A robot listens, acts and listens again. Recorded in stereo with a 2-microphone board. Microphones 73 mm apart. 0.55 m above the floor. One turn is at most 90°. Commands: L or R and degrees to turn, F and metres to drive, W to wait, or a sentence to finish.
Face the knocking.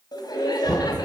L30
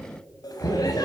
L90
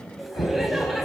L75
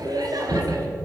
L10
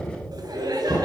Found it: knocking, straight ahead.